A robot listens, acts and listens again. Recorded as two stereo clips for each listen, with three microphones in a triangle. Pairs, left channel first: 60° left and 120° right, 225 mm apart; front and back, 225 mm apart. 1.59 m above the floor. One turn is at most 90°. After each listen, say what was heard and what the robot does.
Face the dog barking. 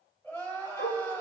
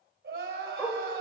The dog barking: 75° left. Turn 75° left.
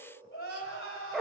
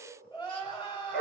The dog barking is now 30° right. Turn 30° right.
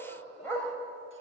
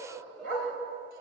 The dog barking is now 20° right. Turn 20° right.
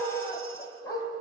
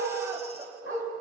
The dog barking is now 15° right. Turn 15° right.
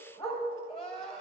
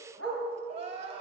Facing the dog barking, 2 to 4 m away.